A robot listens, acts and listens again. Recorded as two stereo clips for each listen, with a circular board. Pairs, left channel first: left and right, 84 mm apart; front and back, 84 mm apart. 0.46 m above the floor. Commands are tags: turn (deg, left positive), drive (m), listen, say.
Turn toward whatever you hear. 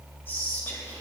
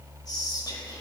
<turn deg="30"/>
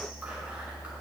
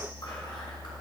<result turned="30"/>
<listen/>
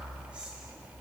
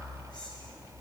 <listen/>
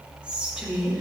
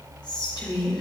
<turn deg="-15"/>
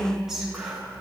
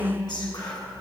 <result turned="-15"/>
<say>Facing the whispering, 2 to 4 m away.</say>